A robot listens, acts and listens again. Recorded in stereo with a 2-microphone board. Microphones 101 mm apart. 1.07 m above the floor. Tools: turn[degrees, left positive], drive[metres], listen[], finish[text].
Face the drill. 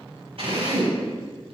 Thought: The drill: about 70° right or 110° right.
Action: turn[-70]
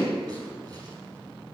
Action: finish[Facing the drill, over 4 m away.]